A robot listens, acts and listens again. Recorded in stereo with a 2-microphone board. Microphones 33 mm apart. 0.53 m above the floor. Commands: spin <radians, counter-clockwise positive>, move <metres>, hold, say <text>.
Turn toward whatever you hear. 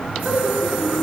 spin -1.05
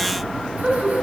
spin -0.96
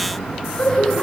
spin 0.44
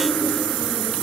spin 0.35
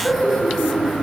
say Facing the laughter.